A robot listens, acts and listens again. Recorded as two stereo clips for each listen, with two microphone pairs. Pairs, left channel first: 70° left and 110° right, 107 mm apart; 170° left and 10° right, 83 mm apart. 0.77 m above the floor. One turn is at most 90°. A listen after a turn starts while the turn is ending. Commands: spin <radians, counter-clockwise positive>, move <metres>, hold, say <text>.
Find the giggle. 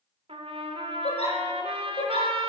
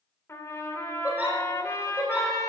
spin 1.05
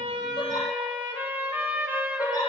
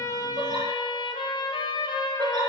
spin 0.26
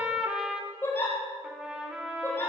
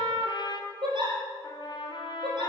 say Facing the giggle, over 4 m away.